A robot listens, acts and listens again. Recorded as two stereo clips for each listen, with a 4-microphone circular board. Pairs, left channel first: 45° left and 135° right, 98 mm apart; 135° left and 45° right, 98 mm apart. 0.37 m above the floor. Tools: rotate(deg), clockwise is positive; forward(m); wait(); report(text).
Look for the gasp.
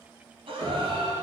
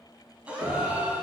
rotate(120)
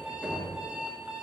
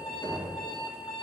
report("I heard a gasp from this way, but can't make it out now.")